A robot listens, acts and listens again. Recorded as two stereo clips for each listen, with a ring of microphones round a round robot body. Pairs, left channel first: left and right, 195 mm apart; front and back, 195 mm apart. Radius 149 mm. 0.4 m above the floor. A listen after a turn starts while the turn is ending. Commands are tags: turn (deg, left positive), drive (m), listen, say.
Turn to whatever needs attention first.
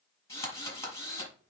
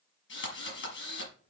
<listen/>
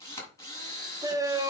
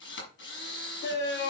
<turn deg="-20"/>
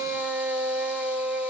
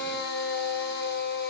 <say>Found it: a shout, straight ahead.</say>